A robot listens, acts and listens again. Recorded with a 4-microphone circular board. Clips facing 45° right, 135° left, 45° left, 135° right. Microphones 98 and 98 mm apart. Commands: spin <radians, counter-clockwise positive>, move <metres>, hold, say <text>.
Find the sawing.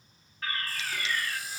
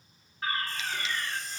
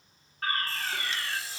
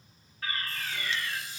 spin 0.61
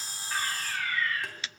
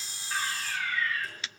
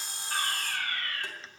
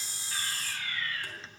say Facing the sawing.